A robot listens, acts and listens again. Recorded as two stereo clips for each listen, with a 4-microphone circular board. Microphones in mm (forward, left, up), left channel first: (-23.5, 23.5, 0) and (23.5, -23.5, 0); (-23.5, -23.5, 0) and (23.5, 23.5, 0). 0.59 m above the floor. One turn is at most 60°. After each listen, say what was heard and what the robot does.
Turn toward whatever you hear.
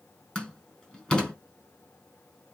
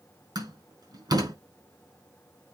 The door slam: 60° left. Turn 60° left.
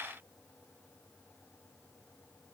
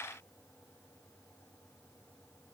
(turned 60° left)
I heard a door slam from this way, but can't make it out now.